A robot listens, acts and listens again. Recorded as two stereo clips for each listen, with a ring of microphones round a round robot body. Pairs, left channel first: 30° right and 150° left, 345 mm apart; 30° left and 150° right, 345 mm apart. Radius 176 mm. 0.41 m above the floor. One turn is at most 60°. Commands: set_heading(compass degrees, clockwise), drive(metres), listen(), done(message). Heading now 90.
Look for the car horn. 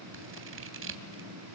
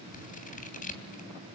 listen()
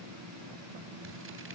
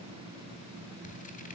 listen()
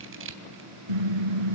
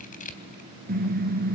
set_heading(30)
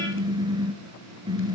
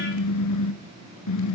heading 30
set_heading(330)
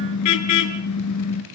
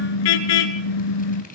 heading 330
set_heading(320)
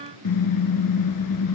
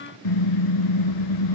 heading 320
done("Found it: a car horn, straight ahead.")